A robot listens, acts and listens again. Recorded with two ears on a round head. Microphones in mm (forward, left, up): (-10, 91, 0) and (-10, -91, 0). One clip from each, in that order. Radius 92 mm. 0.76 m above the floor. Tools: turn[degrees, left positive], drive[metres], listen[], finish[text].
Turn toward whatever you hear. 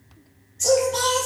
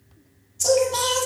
Thought: The singing: about 20° right or 160° right.
Action: turn[-20]
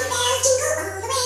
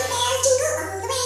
Action: turn[-30]
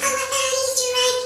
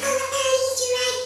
Thought: So it is at 25° left.
Action: turn[25]
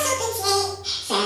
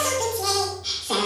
Action: finish[Found it: singing, straight ahead.]